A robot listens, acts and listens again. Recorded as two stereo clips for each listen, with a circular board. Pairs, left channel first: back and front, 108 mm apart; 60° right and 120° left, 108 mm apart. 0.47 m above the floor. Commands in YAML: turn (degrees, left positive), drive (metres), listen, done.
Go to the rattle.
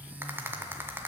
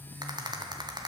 turn: 70
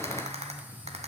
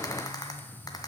drive: 1.0
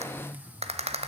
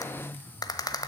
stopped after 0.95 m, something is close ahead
done: "Arrived at the rattle, straight ahead."